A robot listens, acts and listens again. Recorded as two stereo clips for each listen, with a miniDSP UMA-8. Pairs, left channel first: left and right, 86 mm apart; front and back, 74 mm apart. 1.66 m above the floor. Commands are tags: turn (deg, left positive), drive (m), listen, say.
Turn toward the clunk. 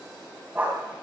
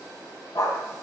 <listen/>
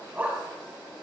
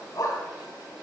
<listen/>
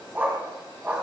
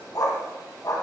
<say>I can't make out a clunk to turn to.</say>